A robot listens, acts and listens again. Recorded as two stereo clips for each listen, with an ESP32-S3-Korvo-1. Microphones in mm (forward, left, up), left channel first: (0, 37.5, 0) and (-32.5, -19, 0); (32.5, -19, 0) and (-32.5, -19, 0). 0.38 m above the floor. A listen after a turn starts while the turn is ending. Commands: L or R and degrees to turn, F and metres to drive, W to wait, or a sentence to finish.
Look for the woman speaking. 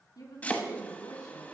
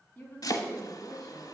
L75
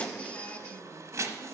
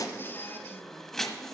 W
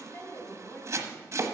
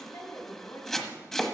L20
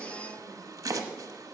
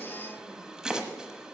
W
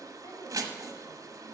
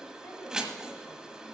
W
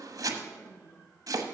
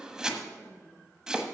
L40
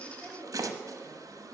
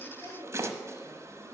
Facing the woman speaking, 2 to 4 m away.